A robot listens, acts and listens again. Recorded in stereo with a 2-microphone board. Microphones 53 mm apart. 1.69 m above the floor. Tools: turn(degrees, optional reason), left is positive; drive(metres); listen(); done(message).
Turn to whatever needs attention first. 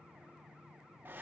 listen()
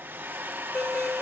turn(degrees=70, reason="The alarm: about 70° left or 110° left.")
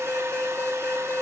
turn(degrees=45, reason="So it is at 45° left.")
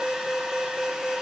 turn(degrees=-15, reason="The alarm is now 15° right.")
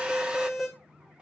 done("Facing the alarm, over 4 m away.")